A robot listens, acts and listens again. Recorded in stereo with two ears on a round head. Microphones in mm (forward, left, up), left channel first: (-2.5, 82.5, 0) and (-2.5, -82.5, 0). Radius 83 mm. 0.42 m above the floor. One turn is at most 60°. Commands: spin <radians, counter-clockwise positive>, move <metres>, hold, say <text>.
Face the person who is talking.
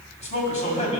spin 0.70
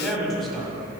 say Facing the man speaking.